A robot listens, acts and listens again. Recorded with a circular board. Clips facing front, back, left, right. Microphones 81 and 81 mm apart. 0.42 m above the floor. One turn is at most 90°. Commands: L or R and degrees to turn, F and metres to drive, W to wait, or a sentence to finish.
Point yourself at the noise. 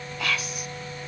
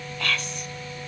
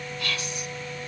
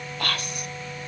R85
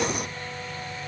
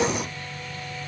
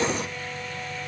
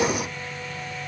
W
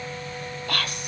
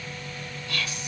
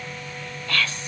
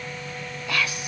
R15
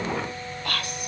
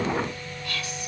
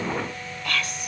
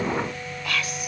Facing the whispering.